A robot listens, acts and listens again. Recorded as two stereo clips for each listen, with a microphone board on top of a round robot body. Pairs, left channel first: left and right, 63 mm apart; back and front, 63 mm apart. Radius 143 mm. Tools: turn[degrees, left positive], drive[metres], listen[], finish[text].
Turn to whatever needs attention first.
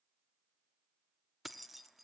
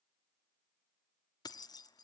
Action: listen[]
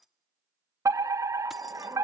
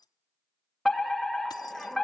Thought: The fire alarm: 95° right.
Action: turn[-95]
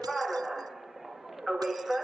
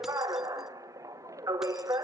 Action: finish[Found it: a fire alarm, straight ahead, 2 to 4 m away.]